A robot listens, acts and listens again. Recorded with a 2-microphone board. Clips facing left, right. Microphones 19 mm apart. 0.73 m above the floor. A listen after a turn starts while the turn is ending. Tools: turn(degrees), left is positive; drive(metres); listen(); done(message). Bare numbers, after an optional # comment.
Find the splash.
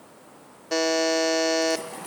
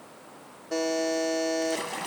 # The splash: about 50° right or 130° right.
turn(-50)
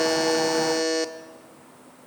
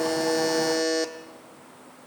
listen()
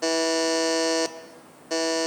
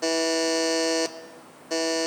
done("I heard a splash, but can't make it out now. It was about straight ahead or 80° right.")